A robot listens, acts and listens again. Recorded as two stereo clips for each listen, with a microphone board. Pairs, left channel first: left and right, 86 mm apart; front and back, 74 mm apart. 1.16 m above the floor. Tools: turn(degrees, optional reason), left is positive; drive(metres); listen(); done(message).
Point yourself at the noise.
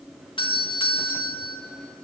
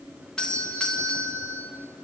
turn(degrees=75, reason="The doorbell: 75° left.")
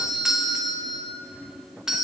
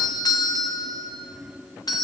done("Found it: a doorbell, straight ahead, 2 to 4 m away.")